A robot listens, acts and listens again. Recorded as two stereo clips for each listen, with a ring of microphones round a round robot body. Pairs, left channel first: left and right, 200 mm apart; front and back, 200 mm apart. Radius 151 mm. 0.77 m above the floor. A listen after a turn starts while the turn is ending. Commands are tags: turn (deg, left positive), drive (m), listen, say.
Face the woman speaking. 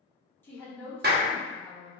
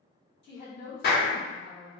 <say>Facing the woman speaking.</say>